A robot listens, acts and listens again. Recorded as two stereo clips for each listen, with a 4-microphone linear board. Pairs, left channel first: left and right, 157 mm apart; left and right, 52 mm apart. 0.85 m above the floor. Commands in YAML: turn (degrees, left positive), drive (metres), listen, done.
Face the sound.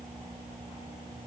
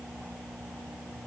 listen: true
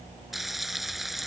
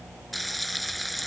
turn: 30
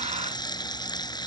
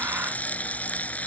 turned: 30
turn: 155
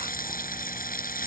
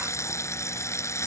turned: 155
turn: 65
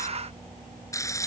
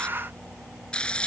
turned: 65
turn: 20
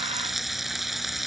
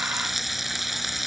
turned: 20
done: "Facing the frying."